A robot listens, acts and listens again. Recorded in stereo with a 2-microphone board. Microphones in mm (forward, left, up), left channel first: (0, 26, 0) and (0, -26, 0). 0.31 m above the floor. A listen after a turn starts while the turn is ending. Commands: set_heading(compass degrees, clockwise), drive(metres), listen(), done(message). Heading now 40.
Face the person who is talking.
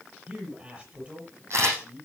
set_heading(65)
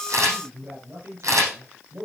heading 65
set_heading(195)
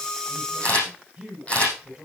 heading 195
set_heading(210)
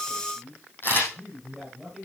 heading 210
done("Found it: a man speaking, straight ahead, over 4 m away.")